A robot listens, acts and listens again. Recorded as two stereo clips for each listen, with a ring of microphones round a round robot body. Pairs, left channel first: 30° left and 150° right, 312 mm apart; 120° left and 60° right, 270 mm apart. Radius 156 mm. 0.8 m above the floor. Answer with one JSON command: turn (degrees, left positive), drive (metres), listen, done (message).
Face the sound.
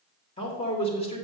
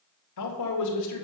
{"turn": 100}
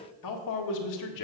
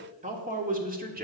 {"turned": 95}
{"done": "Facing the man speaking, 1 to 2 m away."}